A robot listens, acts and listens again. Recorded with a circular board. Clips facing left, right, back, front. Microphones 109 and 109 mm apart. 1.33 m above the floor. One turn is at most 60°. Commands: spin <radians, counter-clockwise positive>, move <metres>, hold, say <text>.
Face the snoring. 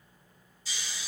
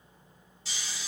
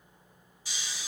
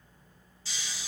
spin -1.05
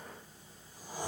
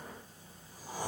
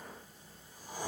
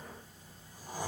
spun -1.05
spin -0.87
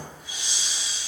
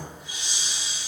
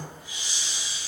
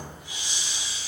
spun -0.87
say Found it: snoring, straight ahead, 1 to 2 m away.